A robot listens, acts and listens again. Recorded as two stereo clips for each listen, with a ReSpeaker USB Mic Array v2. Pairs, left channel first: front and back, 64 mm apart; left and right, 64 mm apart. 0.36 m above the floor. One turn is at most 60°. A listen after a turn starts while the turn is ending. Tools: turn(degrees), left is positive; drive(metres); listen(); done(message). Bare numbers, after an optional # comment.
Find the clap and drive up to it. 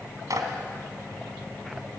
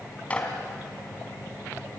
# The clap: 155° left.
turn(60)
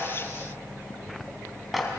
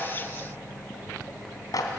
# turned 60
# The clap is now 90° left.
turn(60)
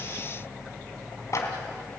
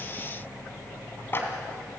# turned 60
# The clap is now 35° left.
turn(35)
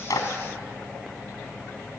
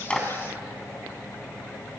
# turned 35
# The clap is now 15° right.
turn(-15)
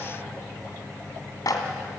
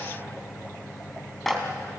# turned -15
drive(1.0)
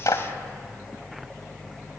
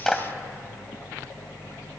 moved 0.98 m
drive(1.0)
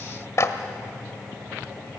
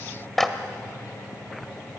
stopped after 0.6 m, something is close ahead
done("Arrived at the clap, straight ahead.")